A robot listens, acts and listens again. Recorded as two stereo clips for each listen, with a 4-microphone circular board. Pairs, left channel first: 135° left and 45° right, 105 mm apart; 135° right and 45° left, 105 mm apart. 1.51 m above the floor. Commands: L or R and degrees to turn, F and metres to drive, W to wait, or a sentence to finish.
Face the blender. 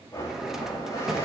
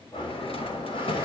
R165
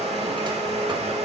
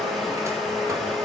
R45
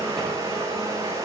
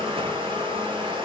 L15
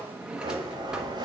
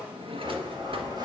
Found it: a blender, straight ahead, 2 to 4 m away.